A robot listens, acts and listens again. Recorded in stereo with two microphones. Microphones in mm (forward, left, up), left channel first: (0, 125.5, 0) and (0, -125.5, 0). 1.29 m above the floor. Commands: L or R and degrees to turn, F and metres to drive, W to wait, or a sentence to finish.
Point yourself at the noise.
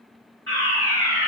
R55
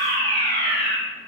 R45
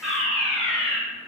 Facing the fire alarm, 2 to 4 m away.